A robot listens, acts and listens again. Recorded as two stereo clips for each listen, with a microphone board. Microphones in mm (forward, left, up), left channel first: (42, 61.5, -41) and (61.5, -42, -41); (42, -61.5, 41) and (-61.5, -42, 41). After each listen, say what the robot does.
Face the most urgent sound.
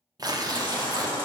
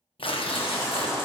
Turn 55° left.
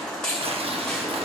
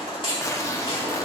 Turn 15° left.
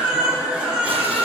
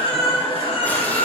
Found it: a baby crying, straight ahead.